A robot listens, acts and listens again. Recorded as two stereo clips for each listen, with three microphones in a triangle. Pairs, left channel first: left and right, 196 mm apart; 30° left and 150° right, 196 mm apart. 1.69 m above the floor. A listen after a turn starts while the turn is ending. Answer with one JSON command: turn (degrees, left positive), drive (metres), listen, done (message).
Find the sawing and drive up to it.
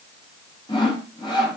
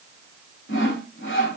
{"turn": 25}
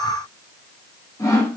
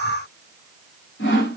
{"turn": 15}
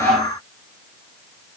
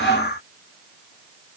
{"listen": true}
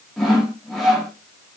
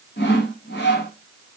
{"drive": 1.0}
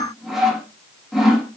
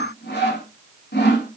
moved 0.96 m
{"drive": 1.0}
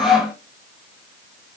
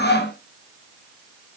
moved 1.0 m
{"drive": 1.0}
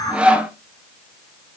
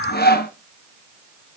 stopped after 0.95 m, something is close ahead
{"done": "Arrived at the sawing, straight ahead."}